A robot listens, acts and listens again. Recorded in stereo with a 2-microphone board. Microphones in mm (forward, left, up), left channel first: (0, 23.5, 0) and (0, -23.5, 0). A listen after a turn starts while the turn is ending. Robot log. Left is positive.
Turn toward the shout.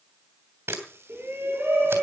note: The shout: about 55° right or 125° right.
cmd yaw -55
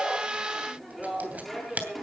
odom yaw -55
end: Facing the shout.